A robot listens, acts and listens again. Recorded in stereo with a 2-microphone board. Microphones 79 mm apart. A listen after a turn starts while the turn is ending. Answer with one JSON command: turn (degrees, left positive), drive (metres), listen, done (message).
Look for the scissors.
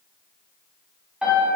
{"listen": true}
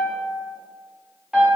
{"listen": true}
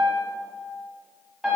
{"done": "I can't make out scissors to turn to."}